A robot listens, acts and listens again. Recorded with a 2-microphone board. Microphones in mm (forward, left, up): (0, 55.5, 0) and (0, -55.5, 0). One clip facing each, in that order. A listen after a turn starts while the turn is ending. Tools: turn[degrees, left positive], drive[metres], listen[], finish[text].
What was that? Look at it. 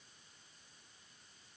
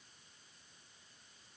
Action: listen[]
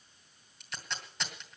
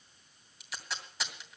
Action: turn[-30]
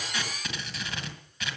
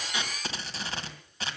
Thought: So it is at 145° right.
Action: turn[-145]
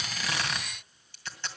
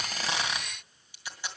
Thought: The tape being pulled is now 10° right.
Action: turn[-10]
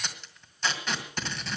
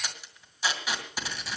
Thought: The tape being pulled is now 10° right.
Action: turn[-10]
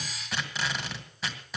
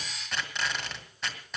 Action: finish[Facing the tape being pulled, 2 to 4 m away.]